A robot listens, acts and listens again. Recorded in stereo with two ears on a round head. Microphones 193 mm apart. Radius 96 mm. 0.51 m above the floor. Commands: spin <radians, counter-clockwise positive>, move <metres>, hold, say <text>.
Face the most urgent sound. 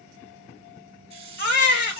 spin 0.87
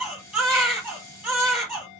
say Facing the baby crying.